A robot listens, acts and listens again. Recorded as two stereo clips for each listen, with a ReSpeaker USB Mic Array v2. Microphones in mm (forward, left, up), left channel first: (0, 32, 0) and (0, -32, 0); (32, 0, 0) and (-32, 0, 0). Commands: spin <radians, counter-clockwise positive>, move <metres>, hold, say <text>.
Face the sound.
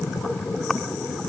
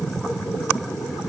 hold
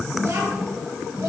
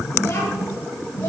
spin -0.87
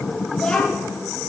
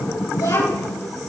spin 0.17
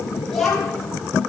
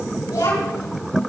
say Facing the child speaking, over 4 m away.